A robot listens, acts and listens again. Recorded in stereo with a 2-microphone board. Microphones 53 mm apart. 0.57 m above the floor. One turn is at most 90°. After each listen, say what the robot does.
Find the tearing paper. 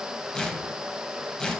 Turn 30° left.
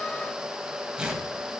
Turn 15° right.
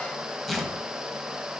Facing the tearing paper.